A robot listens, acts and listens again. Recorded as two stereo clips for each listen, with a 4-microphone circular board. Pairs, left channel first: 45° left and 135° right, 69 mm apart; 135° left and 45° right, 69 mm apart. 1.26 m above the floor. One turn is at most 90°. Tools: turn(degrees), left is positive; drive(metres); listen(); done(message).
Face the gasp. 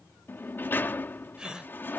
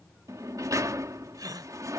turn(degrees=-55)
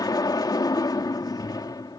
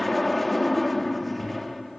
done("Facing where the gasp came from. I can't hear it now.")